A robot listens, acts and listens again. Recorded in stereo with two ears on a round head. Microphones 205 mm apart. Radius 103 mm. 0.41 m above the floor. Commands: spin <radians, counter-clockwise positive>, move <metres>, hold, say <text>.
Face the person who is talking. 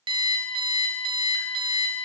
hold
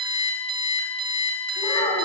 spin 0.44
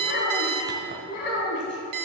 spin 2.09
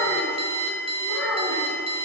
spin 0.17
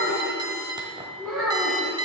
say Found it: a child speaking, straight ahead, 2 to 4 m away.